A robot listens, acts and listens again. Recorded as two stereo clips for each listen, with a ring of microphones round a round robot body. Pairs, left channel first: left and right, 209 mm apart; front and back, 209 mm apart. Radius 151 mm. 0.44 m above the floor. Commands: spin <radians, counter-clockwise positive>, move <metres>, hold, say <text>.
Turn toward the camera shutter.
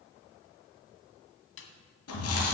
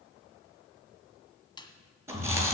hold
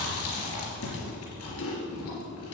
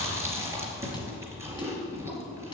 hold
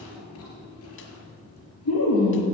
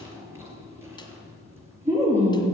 say I can't make out a camera shutter, only a snare drum and chewing.